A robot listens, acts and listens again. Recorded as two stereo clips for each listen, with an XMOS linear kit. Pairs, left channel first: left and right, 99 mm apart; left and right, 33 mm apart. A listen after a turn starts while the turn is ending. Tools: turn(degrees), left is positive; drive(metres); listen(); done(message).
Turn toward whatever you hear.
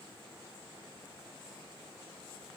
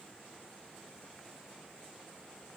listen()
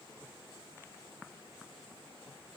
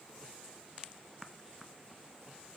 listen()
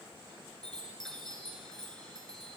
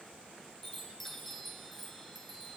turn(degrees=30)
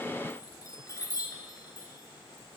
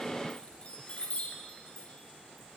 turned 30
turn(degrees=145)
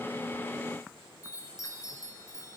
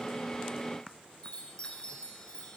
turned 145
turn(degrees=35)
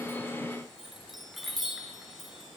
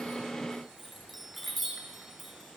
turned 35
done("Found it: a chime, straight ahead.")